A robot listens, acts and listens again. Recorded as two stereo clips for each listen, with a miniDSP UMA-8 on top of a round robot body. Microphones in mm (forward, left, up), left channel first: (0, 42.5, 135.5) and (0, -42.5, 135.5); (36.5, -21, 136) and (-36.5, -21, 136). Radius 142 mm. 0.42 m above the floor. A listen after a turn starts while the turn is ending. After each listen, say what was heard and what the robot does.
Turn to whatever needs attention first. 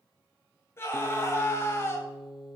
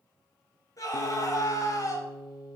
The scream: 35° left. Turn 35° left.
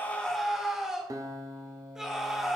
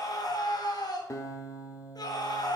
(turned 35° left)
Found it: a scream, straight ahead.